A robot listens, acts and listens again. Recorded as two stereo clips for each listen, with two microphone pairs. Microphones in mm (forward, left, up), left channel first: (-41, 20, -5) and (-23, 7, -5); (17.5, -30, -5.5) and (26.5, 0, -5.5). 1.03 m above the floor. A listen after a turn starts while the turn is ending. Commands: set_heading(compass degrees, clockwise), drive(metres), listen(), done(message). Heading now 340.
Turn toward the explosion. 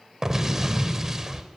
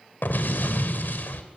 set_heading(85)
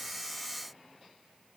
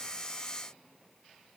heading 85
done("I heard an explosion from this way, but can't make it out now.")